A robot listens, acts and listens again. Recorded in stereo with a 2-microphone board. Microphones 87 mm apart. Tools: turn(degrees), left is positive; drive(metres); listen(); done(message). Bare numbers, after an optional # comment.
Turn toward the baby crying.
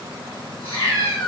listen()
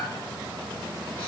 listen()
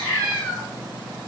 done("I can't make out a baby crying, only a cat meowing.")